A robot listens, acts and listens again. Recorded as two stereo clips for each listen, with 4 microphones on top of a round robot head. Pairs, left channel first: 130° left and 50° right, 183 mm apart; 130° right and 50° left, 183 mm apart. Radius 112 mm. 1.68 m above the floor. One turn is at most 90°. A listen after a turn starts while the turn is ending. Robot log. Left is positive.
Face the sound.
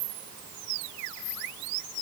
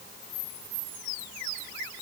cmd idle
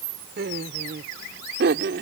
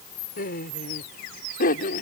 note: The laughter: 85° right.
cmd yaw -85
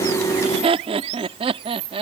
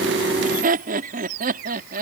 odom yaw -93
note: The laughter is now 10° left.
cmd yaw +10
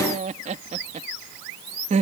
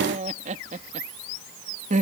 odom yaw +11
end: Found it: laughter, straight ahead.